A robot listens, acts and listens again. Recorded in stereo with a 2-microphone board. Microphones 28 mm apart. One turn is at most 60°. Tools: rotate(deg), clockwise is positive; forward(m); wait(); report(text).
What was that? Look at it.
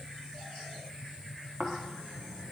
rotate(55)
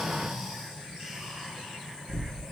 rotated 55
rotate(15)
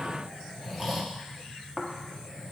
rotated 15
report("Facing the snoring, 1 to 2 m away.")